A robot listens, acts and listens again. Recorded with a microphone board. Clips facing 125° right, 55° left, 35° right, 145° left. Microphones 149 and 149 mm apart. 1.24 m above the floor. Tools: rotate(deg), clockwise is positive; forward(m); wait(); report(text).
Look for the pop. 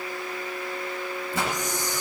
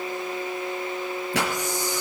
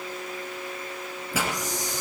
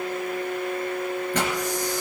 rotate(-50)
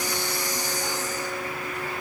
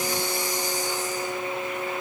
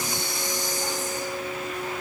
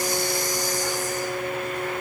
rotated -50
report("Facing where the pop came from. I can't hear it now.")